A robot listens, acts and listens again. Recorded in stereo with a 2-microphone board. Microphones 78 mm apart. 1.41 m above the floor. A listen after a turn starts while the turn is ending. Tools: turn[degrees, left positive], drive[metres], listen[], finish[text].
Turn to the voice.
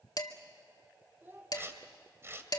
Thought: The child speaking: about 30° right or 150° right.
Action: turn[-30]
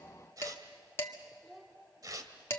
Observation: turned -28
Action: finish[Facing the child speaking, 2 to 4 m away.]